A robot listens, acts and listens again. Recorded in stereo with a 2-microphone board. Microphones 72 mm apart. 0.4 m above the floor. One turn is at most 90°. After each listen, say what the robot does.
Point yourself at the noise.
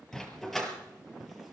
Turn 30° left.
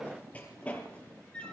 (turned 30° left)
Turn 15° left.
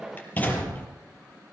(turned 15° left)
Turn 90° left.
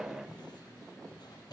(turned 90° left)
Turn 70° left.
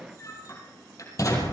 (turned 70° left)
Turn 50° left.
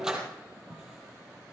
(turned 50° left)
Turn 10° right.
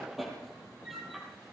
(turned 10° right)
Facing the dog barking.